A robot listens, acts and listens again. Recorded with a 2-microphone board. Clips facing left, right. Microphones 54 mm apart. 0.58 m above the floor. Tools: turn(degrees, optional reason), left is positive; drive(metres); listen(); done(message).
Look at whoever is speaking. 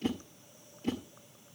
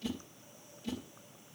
listen()
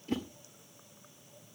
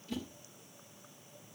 listen()
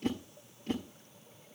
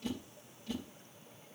done("I can't make out anyone speaking to turn to.")